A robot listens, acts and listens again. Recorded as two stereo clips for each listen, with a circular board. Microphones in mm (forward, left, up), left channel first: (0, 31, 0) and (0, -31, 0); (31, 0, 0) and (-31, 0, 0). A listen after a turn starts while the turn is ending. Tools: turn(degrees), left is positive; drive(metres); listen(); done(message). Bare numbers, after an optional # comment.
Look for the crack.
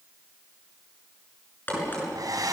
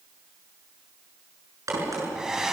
# The crack: 150° left.
turn(150)
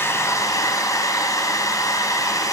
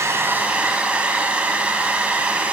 done("I heard a crack from this way, but can't make it out now.")